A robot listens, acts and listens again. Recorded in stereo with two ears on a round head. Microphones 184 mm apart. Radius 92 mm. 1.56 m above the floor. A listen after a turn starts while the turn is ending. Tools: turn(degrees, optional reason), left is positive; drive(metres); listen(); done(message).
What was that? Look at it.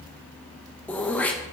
turn(degrees=30)
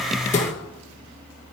turn(degrees=145, reason="So it is at 145° left.")
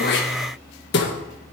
turn(degrees=60, reason="The throat clearing is now 60° left.")
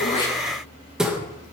done("Facing the throat clearing.")